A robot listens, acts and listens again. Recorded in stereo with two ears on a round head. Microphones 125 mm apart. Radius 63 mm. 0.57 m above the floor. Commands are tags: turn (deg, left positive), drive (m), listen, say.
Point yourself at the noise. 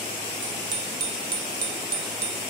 <turn deg="-90"/>
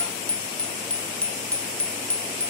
<turn deg="10"/>
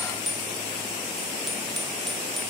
<say>Found it: a bicycle bell, straight ahead.</say>